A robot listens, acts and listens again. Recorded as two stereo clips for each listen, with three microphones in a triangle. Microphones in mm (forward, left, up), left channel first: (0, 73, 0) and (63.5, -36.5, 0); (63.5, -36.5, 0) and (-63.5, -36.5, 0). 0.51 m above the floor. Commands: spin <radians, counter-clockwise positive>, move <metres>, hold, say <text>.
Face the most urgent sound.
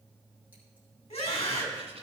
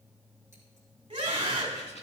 spin 2.44
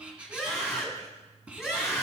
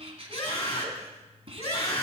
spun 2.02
spin 0.44
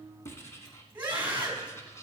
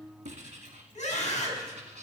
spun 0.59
say Facing the scream, over 4 m away.